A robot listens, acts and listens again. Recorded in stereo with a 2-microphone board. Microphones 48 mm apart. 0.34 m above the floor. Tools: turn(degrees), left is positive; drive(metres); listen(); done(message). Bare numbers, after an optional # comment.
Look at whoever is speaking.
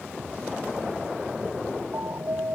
listen()
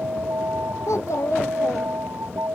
turn(90)
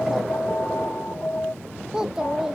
# So it is at 10° right.
turn(-10)
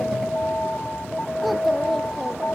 listen()
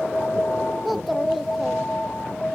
done("Facing the child speaking.")